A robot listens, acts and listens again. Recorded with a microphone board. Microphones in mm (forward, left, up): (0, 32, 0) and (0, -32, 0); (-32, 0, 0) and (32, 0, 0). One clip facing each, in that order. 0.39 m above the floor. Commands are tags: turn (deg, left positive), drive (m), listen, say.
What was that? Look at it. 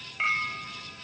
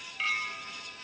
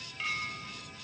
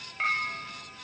<turn deg="35"/>
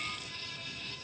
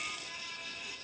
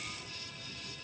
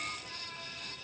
<listen/>
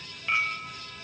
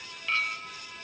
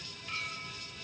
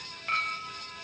<turn deg="15"/>
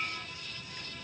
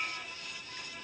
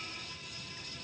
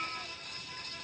<listen/>
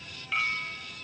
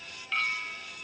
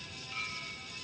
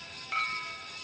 <say>Found it: a clink, straight ahead.</say>